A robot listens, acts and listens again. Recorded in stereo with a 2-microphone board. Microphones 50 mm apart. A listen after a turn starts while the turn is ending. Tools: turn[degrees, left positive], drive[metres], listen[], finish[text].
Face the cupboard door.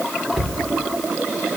Action: turn[30]
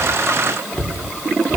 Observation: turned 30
Thought: So it is at 150° left.
Action: turn[150]
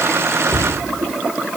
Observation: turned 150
Thought: The cupboard door is now 10° left.
Action: turn[10]
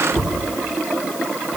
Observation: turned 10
Action: finish[Found it: a cupboard door, straight ahead.]